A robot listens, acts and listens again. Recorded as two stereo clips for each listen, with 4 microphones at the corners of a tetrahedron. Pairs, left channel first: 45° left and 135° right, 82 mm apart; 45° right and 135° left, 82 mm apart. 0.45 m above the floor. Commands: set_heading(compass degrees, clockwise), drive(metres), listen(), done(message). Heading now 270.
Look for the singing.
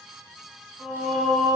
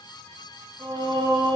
set_heading(125)
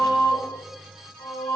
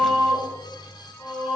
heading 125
set_heading(75)
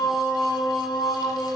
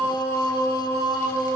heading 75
set_heading(50)
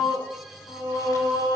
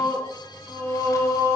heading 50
set_heading(30)
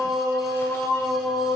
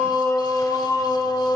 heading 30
done("Facing the singing, 2 to 4 m away.")